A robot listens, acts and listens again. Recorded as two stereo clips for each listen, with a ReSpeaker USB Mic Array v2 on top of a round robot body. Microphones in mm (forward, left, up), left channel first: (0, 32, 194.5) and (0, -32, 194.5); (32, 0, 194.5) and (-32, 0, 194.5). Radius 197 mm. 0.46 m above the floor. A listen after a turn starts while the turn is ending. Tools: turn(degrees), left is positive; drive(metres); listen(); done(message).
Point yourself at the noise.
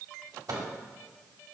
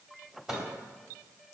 turn(degrees=-100)
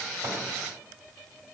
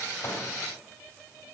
listen()
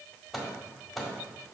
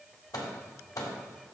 done("Found it: a microwave, straight ahead.")